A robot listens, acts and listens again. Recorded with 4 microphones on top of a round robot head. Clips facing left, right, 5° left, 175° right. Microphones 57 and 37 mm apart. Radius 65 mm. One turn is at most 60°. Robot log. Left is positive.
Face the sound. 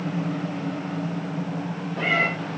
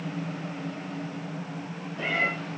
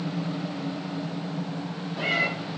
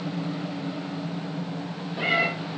note: The cat meowing: 115° left.
cmd yaw +60
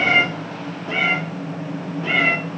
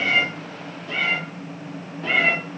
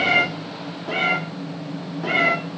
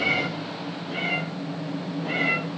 end: Found it: a cat meowing, straight ahead, 1 to 2 m away.